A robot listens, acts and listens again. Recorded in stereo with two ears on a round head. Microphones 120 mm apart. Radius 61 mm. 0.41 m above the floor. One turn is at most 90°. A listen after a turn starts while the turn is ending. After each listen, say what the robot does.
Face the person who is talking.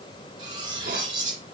Keep listening.
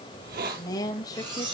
Turn 30° left.
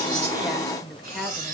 Found it: a woman speaking, straight ahead.